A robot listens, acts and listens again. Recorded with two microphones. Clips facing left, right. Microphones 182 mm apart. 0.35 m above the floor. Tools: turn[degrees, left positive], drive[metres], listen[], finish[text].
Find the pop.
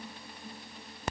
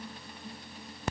Action: listen[]
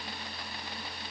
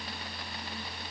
Action: listen[]
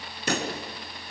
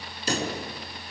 Thought: The pop: about 65° left or 115° left.
Action: turn[65]
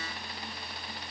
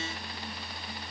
Action: listen[]
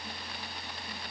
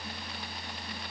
Action: finish[I heard a pop, but can't make it out now. It was about straight ahead or 50° left.]